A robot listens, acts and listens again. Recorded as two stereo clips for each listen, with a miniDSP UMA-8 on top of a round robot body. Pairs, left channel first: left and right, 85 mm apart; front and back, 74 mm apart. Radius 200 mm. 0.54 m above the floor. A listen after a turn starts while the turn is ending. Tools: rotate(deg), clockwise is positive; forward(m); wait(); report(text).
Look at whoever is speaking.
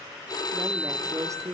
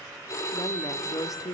rotate(40)
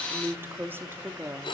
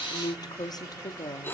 rotate(25)
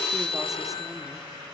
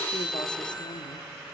wait()
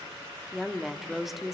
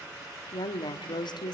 report("Found it: a woman speaking, straight ahead, 1 to 2 m away.")